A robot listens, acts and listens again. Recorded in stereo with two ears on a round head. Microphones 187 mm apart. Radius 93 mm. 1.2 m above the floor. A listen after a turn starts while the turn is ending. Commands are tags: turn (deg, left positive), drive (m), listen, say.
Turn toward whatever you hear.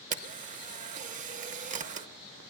<turn deg="-35"/>
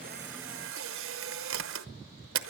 <turn deg="-105"/>
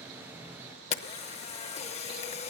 <turn deg="35"/>
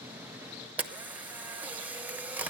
<turn deg="-10"/>
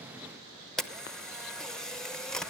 <say>Facing the camera shutter, under 1 m away.</say>